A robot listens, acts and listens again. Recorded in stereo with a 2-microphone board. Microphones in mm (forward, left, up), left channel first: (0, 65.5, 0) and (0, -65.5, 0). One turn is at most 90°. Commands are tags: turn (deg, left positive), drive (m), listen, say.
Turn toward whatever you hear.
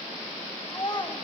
<turn deg="30"/>
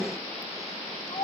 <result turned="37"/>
<turn deg="90"/>
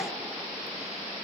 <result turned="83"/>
<turn deg="50"/>
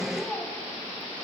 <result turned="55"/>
<say>Facing the child speaking.</say>